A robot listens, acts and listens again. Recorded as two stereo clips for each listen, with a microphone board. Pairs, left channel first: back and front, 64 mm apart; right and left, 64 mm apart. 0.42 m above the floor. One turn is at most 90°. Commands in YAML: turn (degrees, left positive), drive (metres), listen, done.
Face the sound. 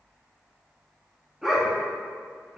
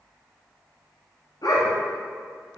turn: -75
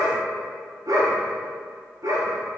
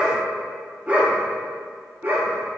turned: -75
turn: 35
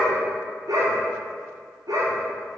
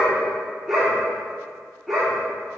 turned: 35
done: "Found it: a dog barking, straight ahead, 2 to 4 m away."